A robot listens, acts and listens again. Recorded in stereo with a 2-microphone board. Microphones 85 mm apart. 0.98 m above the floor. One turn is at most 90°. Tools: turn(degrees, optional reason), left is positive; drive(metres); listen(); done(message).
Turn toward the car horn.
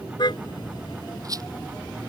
turn(degrees=55, reason="The car horn: about 55° left or 125° left.")
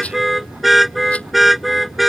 done("Found it: a car horn, straight ahead.")